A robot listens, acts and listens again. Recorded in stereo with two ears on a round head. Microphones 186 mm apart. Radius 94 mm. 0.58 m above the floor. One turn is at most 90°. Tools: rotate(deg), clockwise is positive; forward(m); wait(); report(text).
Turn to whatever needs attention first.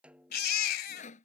rotate(-45)
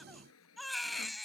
report("Found it: a baby crying, straight ahead.")